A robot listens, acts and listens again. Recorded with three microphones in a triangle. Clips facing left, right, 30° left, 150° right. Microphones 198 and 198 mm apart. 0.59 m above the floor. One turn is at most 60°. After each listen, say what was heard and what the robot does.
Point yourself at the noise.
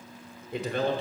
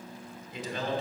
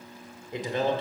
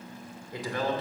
The man speaking: 90° left. Turn 60° left.
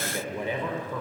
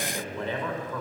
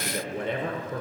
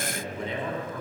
The man speaking is now 10° left. Turn 10° left.
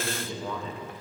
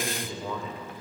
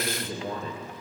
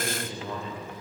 Found it: a man speaking, straight ahead.